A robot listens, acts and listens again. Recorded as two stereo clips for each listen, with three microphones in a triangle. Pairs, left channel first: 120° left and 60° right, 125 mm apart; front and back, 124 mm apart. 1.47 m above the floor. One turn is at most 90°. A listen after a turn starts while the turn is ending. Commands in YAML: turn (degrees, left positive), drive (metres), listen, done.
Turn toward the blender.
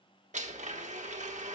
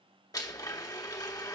turn: -60
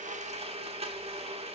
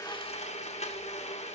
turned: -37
turn: -25
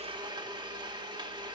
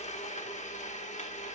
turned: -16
done: "Found it: a blender, straight ahead, 1 to 2 m away."